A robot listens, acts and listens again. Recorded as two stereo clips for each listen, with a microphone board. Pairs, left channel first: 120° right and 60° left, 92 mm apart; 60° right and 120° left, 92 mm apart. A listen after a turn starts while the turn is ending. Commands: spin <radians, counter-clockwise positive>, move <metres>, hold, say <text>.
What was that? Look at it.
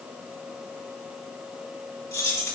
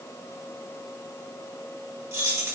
spin -3.05
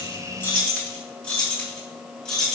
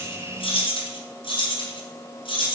spin -0.70
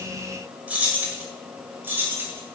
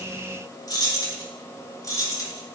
spin -0.17
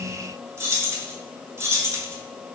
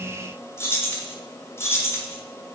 say Found it: keys jangling, straight ahead.